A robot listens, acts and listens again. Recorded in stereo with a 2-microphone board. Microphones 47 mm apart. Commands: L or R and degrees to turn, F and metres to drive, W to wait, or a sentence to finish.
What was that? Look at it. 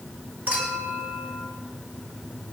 R35
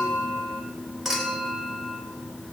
Found it: a clink, straight ahead, over 4 m away.